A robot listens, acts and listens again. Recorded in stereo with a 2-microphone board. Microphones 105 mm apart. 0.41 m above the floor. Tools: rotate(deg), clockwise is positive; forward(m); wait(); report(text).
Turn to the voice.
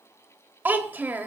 rotate(15)
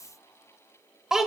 report("Facing the child speaking, under 1 m away.")